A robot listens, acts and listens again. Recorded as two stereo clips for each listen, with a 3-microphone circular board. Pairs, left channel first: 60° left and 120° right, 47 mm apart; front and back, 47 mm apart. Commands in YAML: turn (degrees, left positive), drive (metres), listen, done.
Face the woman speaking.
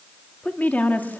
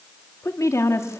done: "Found it: a woman speaking, straight ahead, 2 to 4 m away."